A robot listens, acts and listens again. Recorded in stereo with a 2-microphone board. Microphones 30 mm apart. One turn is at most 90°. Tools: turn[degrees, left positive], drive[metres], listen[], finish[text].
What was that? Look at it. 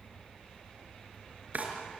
Thought: The drawer: about 55° right or 125° right.
Action: turn[-55]
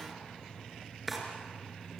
Action: finish[Found it: a drawer, straight ahead, over 4 m away.]